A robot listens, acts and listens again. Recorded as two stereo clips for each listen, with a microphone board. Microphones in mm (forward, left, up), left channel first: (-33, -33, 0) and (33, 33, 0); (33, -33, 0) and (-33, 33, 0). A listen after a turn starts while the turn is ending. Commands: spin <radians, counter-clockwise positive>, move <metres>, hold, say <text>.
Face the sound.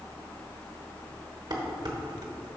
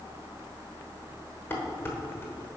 spin 0.26
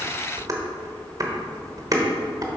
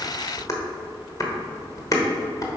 say Facing the dishes clattering.